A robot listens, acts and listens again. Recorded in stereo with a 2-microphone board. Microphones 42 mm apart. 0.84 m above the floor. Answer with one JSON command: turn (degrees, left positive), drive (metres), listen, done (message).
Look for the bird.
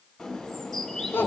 {"turn": 30}
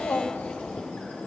{"turn": 145}
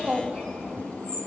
{"turn": 40}
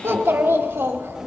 {"listen": true}
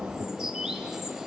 {"turn": -10}
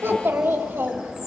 {"done": "Found it: a bird, straight ahead."}